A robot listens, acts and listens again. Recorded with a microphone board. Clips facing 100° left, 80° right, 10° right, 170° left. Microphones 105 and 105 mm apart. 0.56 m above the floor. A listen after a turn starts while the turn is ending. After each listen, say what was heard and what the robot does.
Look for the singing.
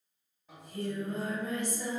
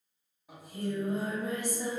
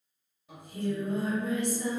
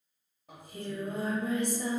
The singing: 155° right. Turn 155° right.
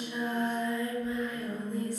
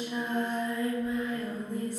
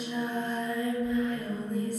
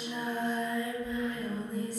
The singing is now 45° right. Turn 45° right.
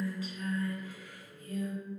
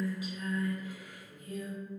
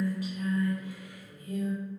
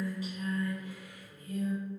Facing the singing, 1 to 2 m away.